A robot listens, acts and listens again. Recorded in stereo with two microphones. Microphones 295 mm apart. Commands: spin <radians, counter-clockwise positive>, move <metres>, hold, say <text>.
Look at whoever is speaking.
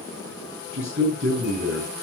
spin -1.22
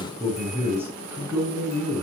spin -0.17
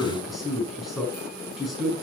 say Facing the man speaking, over 4 m away.